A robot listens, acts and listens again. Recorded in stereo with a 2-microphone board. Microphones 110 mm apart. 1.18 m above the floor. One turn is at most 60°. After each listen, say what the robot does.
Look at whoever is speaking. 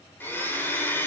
Keep listening.
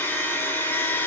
Keep listening.
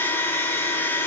I can't make out anyone speaking, only a blender.